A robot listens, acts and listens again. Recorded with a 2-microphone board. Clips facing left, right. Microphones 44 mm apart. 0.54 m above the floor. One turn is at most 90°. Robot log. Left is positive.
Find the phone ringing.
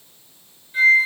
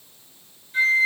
cmd idle
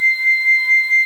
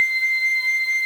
cmd idle
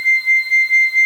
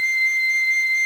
end: I can't make out a phone ringing to turn to.